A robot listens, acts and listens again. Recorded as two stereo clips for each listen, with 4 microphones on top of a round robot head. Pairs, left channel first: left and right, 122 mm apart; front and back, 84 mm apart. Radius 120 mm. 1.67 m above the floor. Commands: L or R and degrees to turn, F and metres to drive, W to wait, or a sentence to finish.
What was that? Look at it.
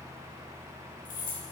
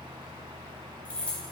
L75
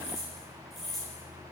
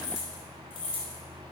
Facing the keys jangling.